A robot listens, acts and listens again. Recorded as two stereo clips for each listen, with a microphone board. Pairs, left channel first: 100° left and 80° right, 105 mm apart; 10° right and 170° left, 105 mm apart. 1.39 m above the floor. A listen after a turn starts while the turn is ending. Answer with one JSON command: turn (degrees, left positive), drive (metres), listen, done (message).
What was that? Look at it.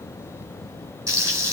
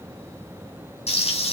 {"turn": -15}
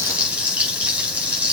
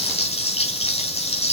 {"done": "Facing the frying, over 4 m away."}